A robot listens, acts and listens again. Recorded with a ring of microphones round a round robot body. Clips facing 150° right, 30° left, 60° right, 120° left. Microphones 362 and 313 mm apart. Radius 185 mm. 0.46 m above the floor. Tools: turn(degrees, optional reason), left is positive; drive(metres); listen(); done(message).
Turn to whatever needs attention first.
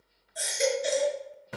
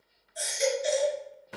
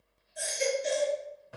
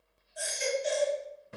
turn(degrees=-125, reason="The baby crying: 125° right.")
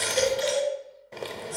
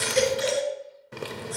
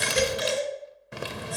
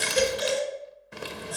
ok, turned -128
done("Facing the baby crying.")